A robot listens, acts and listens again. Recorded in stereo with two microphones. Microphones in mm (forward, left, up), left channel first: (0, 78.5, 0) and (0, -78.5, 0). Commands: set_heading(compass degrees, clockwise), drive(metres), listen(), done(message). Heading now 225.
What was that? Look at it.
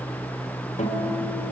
set_heading(175)
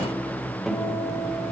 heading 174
done("Facing the guitar.")